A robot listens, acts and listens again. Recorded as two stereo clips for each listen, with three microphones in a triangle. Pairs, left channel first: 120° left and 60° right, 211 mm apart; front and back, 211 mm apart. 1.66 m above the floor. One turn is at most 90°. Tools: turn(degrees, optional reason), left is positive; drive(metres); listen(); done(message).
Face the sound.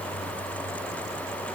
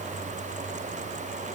listen()
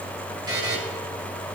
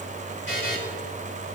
turn(degrees=10, reason="The buzzer: 10° left.")
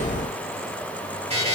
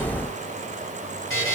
done("Facing the buzzer, 2 to 4 m away.")